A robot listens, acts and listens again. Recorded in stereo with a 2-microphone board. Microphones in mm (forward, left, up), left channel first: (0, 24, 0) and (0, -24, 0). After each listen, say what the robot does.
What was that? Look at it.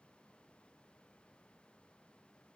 Keep listening.
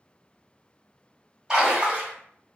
Turn 30° right.
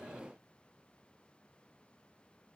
Keep listening.
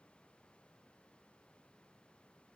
I heard a splash, but can't make it out now. It was about 15° left or 135° right.